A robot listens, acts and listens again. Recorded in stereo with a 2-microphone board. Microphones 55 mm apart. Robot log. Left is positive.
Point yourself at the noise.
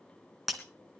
cmd yaw +30
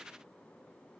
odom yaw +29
cmd idle
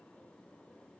end: I heard breaking glass, but can't make it out now. It was about 30° right or 150° left.